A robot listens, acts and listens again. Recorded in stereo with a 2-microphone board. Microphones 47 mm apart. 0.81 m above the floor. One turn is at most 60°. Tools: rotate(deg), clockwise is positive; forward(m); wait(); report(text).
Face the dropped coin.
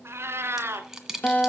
rotate(30)
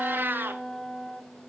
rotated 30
wait()
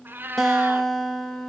report("I heard a dropped coin, but can't make it out now. It was about 20° left or 140° right.")